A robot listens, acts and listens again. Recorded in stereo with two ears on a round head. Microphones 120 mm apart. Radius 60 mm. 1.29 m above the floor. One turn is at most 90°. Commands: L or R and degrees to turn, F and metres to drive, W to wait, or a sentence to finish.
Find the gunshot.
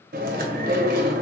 W
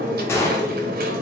L20
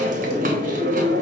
W
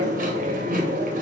I heard a gunshot, but can't make it out now. It was about straight ahead or 140° left.